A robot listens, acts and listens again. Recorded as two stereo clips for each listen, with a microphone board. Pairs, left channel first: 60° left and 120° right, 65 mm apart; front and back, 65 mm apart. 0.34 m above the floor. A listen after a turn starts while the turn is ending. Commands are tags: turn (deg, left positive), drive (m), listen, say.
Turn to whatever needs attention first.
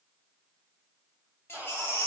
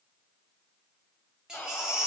<turn deg="100"/>
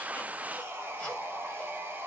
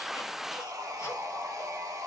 <listen/>
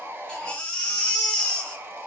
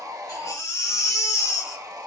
<turn deg="-10"/>
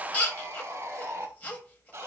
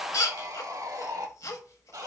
<say>Facing the baby crying, under 1 m away.</say>